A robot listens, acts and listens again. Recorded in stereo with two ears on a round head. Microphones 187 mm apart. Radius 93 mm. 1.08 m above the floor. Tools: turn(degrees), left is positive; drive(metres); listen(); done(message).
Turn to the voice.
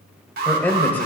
turn(degrees=30)
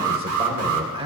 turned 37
turn(degrees=-25)
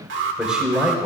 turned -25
done("Found it: a man speaking, straight ahead, over 4 m away.")